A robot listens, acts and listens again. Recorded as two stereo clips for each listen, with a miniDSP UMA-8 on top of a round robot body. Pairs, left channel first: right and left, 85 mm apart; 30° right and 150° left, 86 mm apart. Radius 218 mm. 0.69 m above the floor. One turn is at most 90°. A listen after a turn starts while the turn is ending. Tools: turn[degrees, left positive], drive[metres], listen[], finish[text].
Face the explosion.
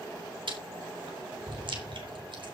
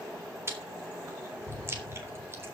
Thought: The explosion: 40° left.
Action: turn[40]
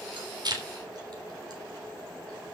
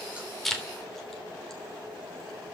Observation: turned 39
Action: finish[I heard an explosion from this way, but can't make it out now.]